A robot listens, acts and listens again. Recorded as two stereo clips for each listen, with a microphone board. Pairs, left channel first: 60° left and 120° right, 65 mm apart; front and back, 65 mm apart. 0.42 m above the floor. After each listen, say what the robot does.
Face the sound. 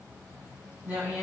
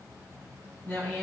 Turn 60° right.
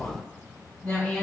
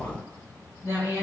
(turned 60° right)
Turn 30° left.
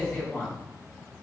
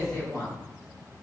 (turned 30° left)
Found it: a woman speaking, straight ahead.